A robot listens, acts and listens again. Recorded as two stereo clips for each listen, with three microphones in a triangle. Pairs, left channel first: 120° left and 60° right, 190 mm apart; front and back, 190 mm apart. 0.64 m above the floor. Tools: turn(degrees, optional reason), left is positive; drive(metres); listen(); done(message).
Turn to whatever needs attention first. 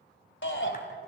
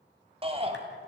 turn(degrees=120, reason="The shout: 120° left.")
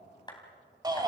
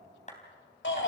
turn(degrees=10, reason="The shout is now 10° left.")
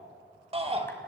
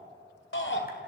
done("Facing the shout, 2 to 4 m away.")